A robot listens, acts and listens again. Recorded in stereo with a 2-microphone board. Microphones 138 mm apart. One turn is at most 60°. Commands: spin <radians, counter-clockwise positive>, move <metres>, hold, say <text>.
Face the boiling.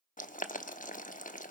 spin 1.05
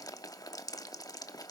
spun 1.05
spin 0.44
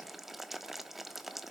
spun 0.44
say Facing the boiling.